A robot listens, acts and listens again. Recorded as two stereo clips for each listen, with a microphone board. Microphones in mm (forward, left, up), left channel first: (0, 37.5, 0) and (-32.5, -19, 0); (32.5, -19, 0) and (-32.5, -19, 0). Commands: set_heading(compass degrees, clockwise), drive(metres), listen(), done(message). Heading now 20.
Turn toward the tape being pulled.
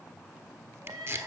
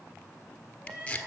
set_heading(95)
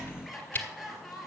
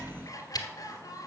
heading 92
done("Facing the tape being pulled, 1 to 2 m away.")